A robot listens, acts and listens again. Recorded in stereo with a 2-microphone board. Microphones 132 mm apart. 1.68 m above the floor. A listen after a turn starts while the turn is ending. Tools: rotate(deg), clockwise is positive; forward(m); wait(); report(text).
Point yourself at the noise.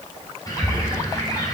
rotate(-25)
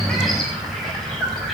report("Found it: a bird, straight ahead.")